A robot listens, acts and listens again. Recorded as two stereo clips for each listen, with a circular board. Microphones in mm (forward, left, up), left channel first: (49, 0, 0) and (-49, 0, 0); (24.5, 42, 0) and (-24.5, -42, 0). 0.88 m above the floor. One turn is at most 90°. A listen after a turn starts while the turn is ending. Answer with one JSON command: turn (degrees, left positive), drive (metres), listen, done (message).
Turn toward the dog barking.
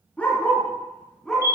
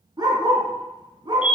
{"turn": -85}
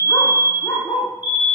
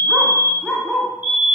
{"turn": -25}
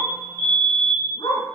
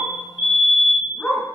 {"turn": -20}
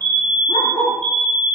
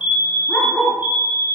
{"turn": -10}
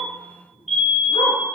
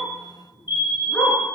{"listen": true}
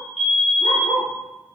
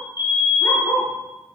{"done": "Facing the dog barking."}